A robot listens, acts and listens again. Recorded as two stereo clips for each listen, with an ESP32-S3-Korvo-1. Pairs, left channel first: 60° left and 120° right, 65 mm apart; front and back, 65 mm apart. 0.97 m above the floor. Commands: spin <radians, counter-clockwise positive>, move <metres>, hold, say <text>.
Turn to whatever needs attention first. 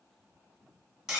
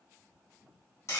hold
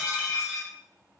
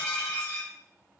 hold
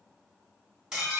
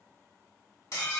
say I can't make out anything urgent to turn to.